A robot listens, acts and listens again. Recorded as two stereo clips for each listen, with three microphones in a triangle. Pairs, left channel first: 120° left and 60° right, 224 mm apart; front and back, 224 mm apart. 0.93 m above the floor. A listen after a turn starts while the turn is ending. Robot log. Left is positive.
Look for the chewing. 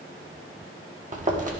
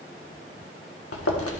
end: Facing the chewing, 1 to 2 m away.